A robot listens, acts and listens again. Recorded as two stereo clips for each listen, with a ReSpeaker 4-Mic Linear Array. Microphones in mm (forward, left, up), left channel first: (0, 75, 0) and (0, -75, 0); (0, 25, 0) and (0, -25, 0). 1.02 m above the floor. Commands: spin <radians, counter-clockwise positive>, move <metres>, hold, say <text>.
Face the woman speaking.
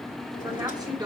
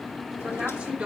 spin -0.52
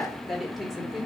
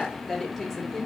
say Found it: a woman speaking, straight ahead.